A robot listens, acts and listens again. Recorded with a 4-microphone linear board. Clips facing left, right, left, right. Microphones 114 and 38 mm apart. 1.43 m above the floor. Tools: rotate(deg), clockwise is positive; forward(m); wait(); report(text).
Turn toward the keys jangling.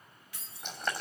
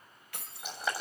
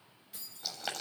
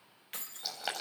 rotate(60)
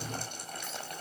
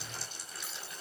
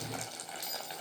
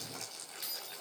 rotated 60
wait()
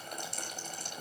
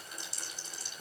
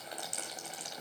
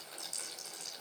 wait()
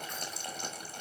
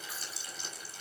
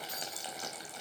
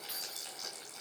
report("I heard keys jangling, but can't make it out now. It was about straight ahead or 60° right.")